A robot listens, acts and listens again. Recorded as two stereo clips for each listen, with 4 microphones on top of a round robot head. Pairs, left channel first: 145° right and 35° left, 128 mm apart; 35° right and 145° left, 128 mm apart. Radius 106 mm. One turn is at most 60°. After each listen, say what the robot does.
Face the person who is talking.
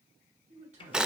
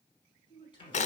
Turn 15° left.
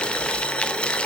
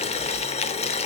Keep listening.
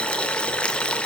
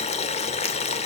Keep listening.
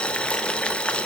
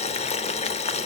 Facing where the man speaking came from. I can't hear it now.